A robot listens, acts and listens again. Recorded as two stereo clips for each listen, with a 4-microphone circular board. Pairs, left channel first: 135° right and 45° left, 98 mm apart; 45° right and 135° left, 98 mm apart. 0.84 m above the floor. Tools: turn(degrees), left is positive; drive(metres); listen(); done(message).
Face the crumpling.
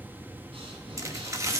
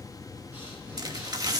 turn(degrees=95)
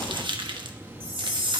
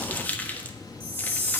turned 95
turn(degrees=25)
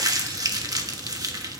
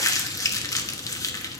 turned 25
done("Facing the crumpling, 1 to 2 m away.")